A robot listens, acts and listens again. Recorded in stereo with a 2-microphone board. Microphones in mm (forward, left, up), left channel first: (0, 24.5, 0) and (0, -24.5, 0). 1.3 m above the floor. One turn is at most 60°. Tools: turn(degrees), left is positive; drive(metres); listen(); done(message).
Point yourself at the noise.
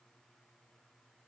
listen()
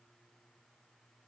listen()
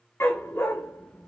turn(degrees=55)
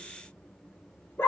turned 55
turn(degrees=50)
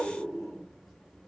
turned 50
listen()
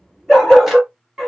done("Found it: a dog barking, straight ahead.")